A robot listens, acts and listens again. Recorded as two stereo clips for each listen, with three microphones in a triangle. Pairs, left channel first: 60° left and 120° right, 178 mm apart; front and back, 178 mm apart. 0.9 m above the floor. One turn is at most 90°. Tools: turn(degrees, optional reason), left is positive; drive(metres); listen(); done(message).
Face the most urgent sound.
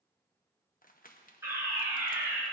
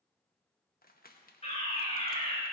turn(degrees=-50, reason="The fire alarm: 50° right.")
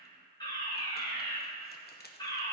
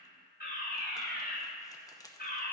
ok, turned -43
done("Facing the fire alarm.")